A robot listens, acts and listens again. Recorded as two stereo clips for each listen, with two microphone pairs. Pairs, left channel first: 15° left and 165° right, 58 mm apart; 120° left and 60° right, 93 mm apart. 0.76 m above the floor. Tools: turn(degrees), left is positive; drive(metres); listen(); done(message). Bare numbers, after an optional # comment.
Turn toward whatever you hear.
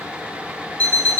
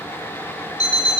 # The alarm clock: 75° left.
turn(75)
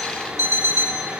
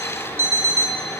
done("Found it: an alarm clock, straight ahead, 1 to 2 m away.")